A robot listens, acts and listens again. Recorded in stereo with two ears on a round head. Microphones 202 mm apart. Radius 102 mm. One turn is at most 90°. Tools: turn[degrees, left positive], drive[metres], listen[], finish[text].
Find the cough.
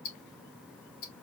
Action: listen[]
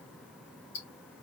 Action: listen[]
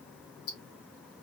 Action: finish[I can't make out a cough, only ticking.]